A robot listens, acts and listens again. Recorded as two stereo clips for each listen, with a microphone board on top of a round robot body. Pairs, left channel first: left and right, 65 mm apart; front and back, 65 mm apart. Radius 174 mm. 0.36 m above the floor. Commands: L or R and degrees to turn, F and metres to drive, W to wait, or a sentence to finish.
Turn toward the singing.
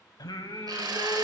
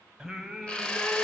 L100
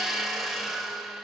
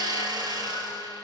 W
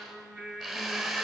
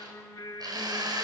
Facing the singing, 2 to 4 m away.